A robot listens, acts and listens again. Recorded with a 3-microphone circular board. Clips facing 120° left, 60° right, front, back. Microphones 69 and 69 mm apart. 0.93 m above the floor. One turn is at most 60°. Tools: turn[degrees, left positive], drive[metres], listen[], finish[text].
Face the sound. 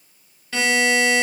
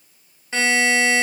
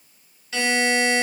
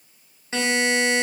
Thought: The buzzer: 125° right.
Action: turn[-60]
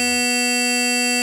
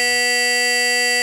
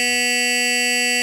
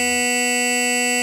Thought: The buzzer is now 85° right.
Action: turn[-60]
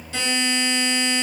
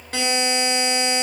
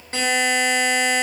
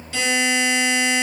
Thought: The buzzer is now 40° right.
Action: turn[-40]
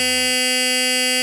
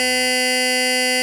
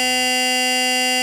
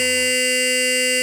Action: finish[Found it: a buzzer, straight ahead, 1 to 2 m away.]